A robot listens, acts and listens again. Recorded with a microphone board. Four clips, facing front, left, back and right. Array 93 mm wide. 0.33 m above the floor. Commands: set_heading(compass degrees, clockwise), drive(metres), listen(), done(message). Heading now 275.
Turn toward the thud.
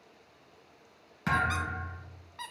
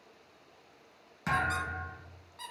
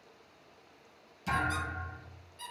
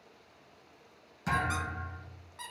set_heading(255)
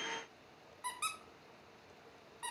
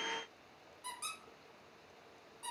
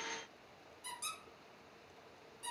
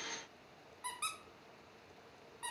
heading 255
done("Facing where the thud came from. I can't hear it now.")